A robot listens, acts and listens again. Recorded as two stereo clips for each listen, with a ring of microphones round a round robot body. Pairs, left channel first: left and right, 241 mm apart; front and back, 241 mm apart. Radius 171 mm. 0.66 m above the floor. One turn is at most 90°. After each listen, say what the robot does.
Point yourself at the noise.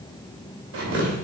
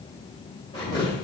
Turn 75° right.
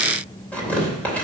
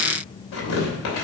Facing the tearing paper.